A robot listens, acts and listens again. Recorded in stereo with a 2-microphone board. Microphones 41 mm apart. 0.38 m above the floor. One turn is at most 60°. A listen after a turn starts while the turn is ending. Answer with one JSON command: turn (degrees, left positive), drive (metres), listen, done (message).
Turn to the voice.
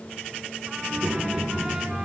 {"turn": -60}
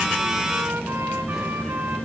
{"done": "Found it: a child speaking, straight ahead, over 4 m away."}